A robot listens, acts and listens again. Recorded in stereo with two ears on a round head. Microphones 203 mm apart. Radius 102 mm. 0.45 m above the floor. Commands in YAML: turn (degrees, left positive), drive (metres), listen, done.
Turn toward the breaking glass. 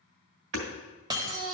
turn: -20
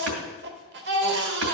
listen: true
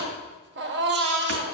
done: "I heard breaking glass, but can't make it out now. It was about straight ahead or 140° right."